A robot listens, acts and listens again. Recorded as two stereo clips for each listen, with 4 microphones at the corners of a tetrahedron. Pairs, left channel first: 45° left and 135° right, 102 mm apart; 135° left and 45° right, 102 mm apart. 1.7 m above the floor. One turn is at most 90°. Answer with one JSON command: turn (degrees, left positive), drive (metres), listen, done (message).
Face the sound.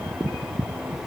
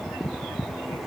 {"listen": true}
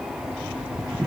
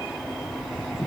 {"listen": true}
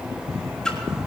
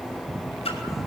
{"turn": 90}
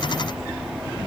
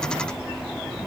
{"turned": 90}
{"turn": 40}
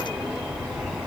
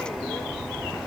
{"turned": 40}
{"done": "I heard a splash from this way, but can't make it out now."}